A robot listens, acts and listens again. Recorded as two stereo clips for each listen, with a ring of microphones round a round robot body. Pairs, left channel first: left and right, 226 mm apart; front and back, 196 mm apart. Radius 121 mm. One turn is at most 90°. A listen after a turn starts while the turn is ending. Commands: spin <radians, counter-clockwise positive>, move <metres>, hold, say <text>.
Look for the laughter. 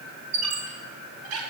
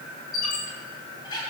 hold
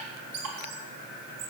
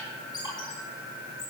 hold
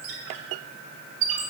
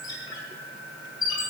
say I can't make out laughter to turn to.